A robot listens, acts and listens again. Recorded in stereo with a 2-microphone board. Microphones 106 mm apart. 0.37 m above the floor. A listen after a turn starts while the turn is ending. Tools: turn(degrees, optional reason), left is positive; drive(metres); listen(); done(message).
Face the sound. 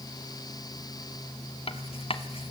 turn(degrees=65, reason="The writing: about 65° left or 115° left.")
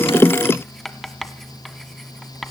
done("Found it: writing, straight ahead.")